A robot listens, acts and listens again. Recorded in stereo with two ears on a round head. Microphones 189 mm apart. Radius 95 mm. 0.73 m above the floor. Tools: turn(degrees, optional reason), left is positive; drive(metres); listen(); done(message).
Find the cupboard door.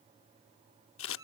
listen()
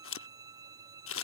listen()
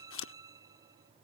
done("I can't make out a cupboard door to turn to.")